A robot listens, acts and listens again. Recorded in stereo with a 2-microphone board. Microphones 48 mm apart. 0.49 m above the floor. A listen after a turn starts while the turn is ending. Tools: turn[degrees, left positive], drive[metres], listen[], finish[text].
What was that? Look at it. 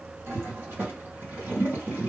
Thought: The toilet flushing: about 55° right or 125° right.
Action: turn[-55]
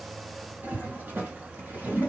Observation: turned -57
Thought: So it is at 60° right.
Action: turn[-60]
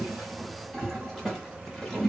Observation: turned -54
Action: finish[Facing the toilet flushing, 2 to 4 m away.]